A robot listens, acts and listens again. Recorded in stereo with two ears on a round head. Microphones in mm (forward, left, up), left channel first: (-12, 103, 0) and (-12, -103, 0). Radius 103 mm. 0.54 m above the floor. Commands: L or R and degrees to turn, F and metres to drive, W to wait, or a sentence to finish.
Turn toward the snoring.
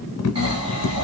R25
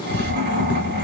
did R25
R130
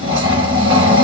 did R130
R20
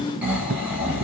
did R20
Facing the snoring, 1 to 2 m away.